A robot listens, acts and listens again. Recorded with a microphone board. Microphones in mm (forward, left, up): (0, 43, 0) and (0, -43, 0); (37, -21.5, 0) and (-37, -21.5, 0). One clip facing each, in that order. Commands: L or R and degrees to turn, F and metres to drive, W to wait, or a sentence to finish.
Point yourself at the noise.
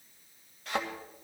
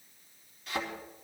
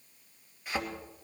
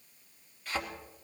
L75
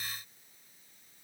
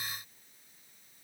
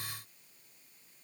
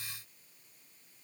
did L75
I heard a thud from this way, but can't make it out now.